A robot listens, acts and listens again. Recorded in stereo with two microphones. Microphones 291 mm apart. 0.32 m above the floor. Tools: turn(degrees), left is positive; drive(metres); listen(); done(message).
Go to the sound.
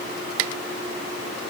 listen()
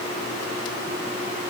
listen()
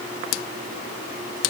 done("I can't make out anything.")